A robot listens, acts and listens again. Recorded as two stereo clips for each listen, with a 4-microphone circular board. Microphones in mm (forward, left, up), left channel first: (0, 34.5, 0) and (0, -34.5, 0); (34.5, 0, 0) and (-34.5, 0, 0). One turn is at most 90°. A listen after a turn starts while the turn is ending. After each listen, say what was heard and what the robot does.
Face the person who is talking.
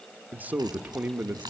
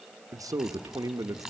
The man speaking: 155° right. Turn 90° right.
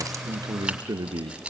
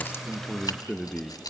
The man speaking is now 75° right. Turn 75° right.
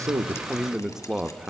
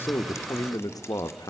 The man speaking is now 10° right. Turn 10° right.
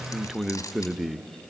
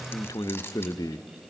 Facing the man speaking.